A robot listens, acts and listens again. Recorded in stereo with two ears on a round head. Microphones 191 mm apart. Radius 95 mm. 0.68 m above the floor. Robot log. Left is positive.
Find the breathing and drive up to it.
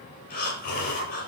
note: The breathing: about 45° left or 135° left.
cmd yaw +45
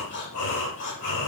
note: So it is at 90° left.
cmd yaw +90
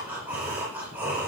note: The breathing is now 10° right.
cmd yaw -10
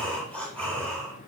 cmd fwd 1.0
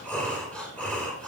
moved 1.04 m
cmd fwd 1.0
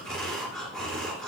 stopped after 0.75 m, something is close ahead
end: Something is in my way. I am facing the breathing but have not reached it.